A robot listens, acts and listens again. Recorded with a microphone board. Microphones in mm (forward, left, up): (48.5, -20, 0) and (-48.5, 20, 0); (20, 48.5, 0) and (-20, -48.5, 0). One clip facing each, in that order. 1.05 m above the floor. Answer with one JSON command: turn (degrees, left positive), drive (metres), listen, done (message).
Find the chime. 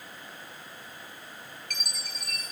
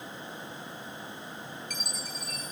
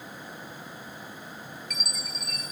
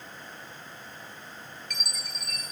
{"turn": -20}
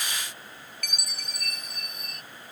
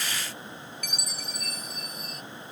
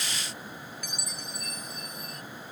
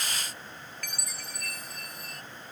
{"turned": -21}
{"done": "Found it: a chime, straight ahead."}